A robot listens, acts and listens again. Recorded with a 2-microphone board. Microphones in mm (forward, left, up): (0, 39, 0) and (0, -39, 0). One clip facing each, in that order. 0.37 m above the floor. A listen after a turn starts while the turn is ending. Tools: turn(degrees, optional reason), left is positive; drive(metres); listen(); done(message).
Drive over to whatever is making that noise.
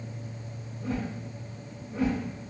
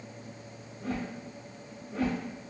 turn(degrees=-90)
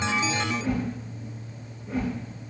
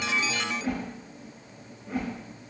turn(degrees=-10, reason="So it is at 10° right.")
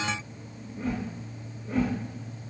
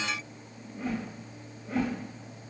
drive(metres=1.0)
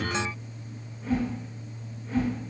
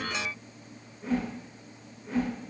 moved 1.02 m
drive(metres=1.0)
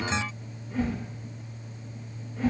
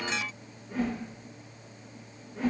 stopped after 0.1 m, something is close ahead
done("Arrived at the whoosh, straight ahead.")